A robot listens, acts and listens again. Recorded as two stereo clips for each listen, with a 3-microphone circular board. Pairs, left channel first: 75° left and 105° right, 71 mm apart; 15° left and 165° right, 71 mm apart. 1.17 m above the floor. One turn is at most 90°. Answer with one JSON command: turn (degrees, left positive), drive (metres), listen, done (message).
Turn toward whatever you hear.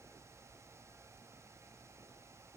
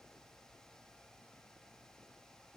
{"listen": true}
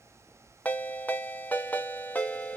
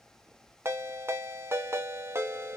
{"turn": 90}
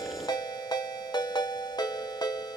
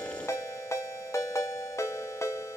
{"turn": 60}
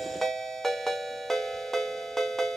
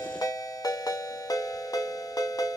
{"turn": -10}
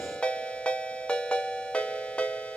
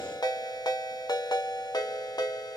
{"done": "Facing the ringtone."}